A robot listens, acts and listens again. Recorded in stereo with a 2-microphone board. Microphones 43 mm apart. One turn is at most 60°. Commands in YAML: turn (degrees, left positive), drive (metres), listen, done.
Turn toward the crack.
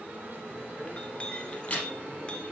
turn: 35
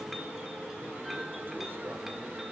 listen: true
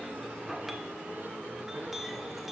done: "I heard a crack, but can't make it out now. It was about straight ahead or 110° left."